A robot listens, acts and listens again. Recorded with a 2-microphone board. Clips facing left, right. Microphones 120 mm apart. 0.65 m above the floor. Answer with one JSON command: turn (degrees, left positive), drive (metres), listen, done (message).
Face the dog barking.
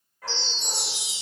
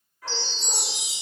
{"turn": 45}
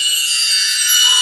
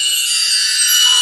{"listen": true}
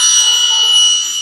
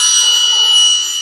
{"listen": true}
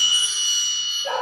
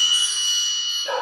{"turn": 90}
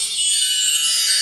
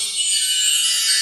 {"listen": true}
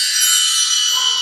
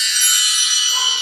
{"listen": true}
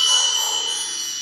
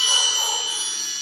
{"done": "Facing where the dog barking came from. I can't hear it now."}